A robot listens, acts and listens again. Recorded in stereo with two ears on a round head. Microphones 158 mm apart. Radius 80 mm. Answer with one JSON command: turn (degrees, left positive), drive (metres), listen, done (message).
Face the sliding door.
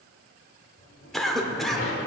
{"turn": 65}
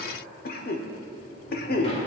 {"listen": true}
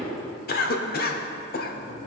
{"turn": 35}
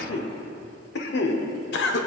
{"listen": true}
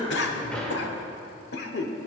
{"done": "Facing the sliding door, 1 to 2 m away."}